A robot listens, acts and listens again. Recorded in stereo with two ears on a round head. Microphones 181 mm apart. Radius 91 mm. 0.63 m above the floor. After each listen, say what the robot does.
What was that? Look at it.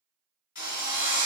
Turn 50° left.
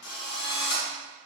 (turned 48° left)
Turn 85° left.
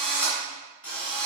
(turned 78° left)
Facing the drill.